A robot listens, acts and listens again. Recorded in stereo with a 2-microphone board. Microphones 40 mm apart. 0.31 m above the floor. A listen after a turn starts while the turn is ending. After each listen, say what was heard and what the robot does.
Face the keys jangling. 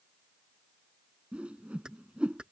The keys jangling: about 25° right or 155° right. Turn 25° right.
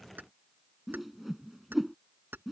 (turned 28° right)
So it is at 115° right. Turn 115° right.
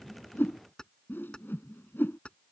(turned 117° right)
The keys jangling is now 30° left. Turn 30° left.
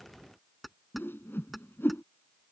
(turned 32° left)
Found it: keys jangling, straight ahead.